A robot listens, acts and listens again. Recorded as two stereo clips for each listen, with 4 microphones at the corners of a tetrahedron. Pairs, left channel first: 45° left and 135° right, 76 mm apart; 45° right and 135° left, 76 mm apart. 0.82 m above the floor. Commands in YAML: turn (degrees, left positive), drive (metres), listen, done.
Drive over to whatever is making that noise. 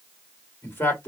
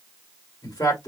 turn: -20
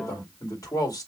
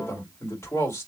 drive: 1.0
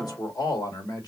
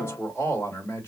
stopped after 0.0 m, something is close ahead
turn: 10
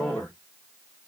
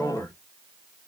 done: "Something is in my way. I am facing the man speaking but have not reached it."